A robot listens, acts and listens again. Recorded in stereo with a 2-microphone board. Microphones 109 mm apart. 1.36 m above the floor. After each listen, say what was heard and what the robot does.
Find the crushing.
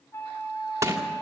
The crushing: about 30° right or 150° right. Turn 30° right.
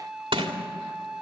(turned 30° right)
So it is at 120° right. Turn 120° right.
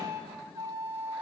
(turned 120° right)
Keep listening.
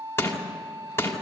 The crushing is now 25° left. Turn 25° left.
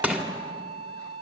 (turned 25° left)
The crushing is now 10° right. Turn 10° right.
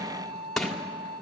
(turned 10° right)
Facing the crushing.